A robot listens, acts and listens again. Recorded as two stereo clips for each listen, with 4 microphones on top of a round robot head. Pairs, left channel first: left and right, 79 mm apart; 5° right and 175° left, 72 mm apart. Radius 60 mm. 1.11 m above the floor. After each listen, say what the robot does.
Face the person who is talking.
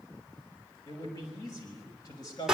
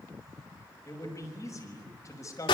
Turn 35° left.
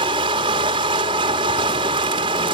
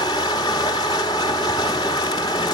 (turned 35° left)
Keep listening.
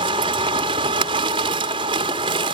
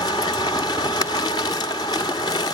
Keep listening.
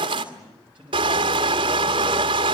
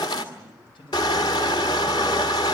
Turn 10° right.
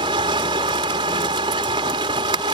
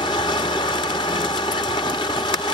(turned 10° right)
Keep listening.
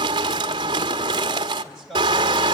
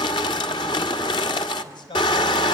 Found it: a man speaking, straight ahead, over 4 m away.